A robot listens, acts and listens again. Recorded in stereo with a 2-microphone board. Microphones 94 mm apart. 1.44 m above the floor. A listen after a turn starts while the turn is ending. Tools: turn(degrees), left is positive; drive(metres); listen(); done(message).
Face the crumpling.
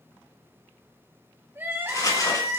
turn(degrees=40)
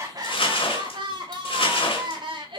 turn(degrees=100)
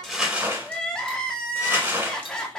turn(degrees=-25)
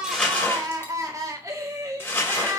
turn(degrees=25)
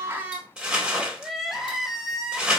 turn(degrees=-10)
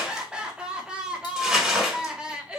done("Found it: crumpling, straight ahead.")